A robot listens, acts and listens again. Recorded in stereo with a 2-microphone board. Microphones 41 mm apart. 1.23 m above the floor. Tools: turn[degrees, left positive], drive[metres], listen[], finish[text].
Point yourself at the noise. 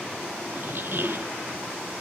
Thought: The squeak: about 60° right or 120° right.
Action: turn[-60]
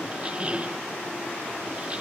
Thought: So it is at 35° right.
Action: turn[-35]
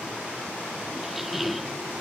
Action: finish[Facing the squeak.]